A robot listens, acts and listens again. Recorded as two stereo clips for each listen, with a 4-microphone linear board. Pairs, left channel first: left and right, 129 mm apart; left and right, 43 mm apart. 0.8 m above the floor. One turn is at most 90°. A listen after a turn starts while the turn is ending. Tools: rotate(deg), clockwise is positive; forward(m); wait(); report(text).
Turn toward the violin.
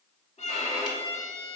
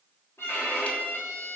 rotate(-60)
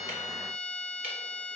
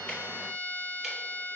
rotate(-65)
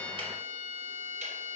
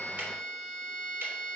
report("Facing the violin, 1 to 2 m away.")